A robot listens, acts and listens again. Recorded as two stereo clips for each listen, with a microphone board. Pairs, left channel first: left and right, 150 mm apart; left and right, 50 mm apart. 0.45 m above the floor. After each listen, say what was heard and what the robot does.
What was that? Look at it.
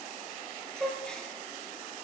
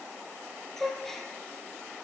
Turn 30° left.
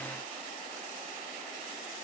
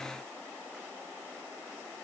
Keep listening.
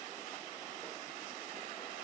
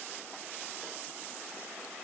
I heard a gasp, but can't make it out now. It was about 25° right or 145° left.